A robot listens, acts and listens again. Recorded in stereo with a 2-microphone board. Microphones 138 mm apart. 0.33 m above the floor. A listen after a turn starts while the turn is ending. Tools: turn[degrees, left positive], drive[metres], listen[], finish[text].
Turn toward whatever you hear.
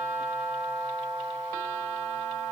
Action: listen[]
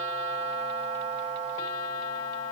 Action: listen[]
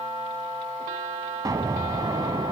Thought: The explosion: about 25° right or 155° right.
Action: turn[-25]
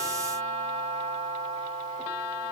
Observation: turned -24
Action: listen[]
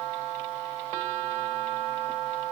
Action: finish[I heard an explosion, but can't make it out now. It was about 5° right or 130° right.]